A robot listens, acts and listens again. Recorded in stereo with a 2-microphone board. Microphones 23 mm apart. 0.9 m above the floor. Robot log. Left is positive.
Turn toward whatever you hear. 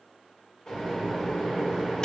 note: The microwave: about 40° left or 140° left.
cmd yaw +40
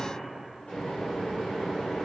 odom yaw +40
note: So it is at 100° left.
cmd yaw +100
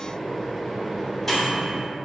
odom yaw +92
note: The microwave is now 10° left.
cmd yaw +10
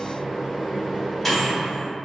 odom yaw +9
end: Found it: a microwave, straight ahead, 1 to 2 m away.